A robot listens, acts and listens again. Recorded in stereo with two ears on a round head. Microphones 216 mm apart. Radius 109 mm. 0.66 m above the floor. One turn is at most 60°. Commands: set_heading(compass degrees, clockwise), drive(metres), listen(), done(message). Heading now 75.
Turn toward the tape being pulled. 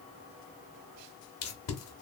set_heading(15)
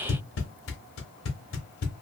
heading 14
set_heading(319)
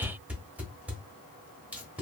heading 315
done("Facing the tape being pulled, under 1 m away.")